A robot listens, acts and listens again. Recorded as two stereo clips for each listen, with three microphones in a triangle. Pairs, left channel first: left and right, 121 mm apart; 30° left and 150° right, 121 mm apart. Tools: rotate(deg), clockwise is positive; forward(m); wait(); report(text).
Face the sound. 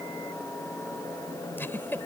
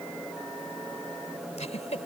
rotate(-20)
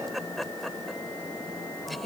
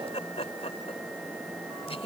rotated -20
report("Facing the giggle.")